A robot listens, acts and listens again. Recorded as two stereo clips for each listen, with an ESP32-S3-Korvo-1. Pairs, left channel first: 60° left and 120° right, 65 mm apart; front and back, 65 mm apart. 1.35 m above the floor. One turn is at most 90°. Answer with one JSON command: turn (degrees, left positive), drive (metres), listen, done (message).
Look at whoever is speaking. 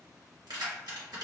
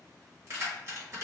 {"listen": true}
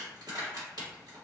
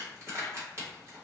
{"listen": true}
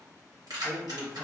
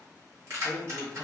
{"turn": 90}
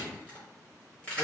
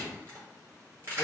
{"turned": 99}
{"turn": 70}
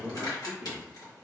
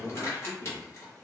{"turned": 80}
{"turn": -10}
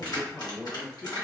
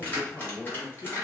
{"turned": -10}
{"done": "Found it: a man speaking, straight ahead."}